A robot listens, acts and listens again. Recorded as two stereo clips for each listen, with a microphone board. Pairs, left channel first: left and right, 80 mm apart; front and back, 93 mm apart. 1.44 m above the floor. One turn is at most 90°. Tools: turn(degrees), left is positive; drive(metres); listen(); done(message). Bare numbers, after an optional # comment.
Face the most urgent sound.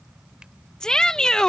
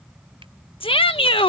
# The shout: 10° left.
turn(10)
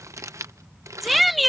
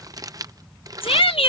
done("Facing the shout.")